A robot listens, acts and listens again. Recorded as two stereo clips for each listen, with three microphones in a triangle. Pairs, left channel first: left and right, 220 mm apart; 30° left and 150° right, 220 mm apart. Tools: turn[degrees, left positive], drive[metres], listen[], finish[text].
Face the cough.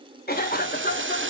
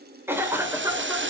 Thought: The cough: 130° left.
Action: turn[130]
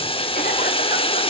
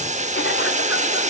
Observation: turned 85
Thought: Nothing new. It was at 45° left.
Action: turn[45]
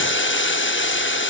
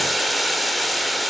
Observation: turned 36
Thought: Nothing new. It was at 10° left.
Action: turn[10]
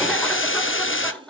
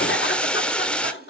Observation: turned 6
Action: finish[Facing where the cough came from. I can't hear it now.]